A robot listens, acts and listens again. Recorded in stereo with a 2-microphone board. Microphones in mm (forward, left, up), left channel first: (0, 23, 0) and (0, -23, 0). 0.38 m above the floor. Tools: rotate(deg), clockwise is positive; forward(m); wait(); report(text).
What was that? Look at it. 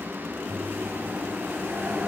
rotate(55)
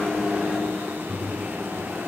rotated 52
rotate(20)
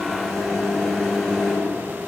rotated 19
report("Facing the microwave.")